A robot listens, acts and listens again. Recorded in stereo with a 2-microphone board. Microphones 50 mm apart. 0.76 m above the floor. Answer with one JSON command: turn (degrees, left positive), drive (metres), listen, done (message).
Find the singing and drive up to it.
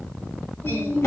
{"turn": 70}
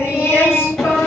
{"turn": 40}
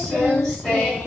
{"drive": 1.0}
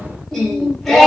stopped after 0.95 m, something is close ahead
{"done": "I am next to the singing."}